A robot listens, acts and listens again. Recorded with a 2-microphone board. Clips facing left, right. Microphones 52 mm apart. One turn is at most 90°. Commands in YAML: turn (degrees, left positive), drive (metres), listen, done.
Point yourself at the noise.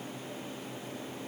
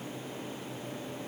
listen: true
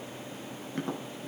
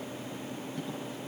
turn: 55
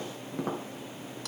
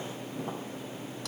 turn: 70
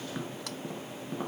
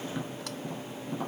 turn: 10
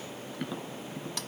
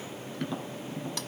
done: "Facing the tapping."